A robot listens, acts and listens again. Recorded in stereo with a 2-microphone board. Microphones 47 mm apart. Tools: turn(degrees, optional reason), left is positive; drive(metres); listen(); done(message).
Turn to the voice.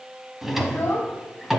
turn(degrees=35, reason="The child speaking: about 35° left or 145° left.")
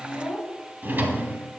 done("Found it: a child speaking, straight ahead.")